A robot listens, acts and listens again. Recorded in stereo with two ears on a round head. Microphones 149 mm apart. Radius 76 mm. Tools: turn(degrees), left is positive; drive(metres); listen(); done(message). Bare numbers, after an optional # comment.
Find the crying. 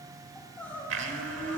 turn(30)
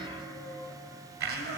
# So it is at 20° right.
turn(-20)
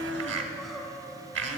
done("Found it: crying, straight ahead.")